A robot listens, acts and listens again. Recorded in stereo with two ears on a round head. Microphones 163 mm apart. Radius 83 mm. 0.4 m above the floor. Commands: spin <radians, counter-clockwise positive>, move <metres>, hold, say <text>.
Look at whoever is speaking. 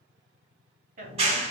spin -0.79
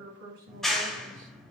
spin -1.22
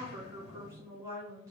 spin -0.35
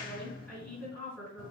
say Facing the woman speaking, 2 to 4 m away.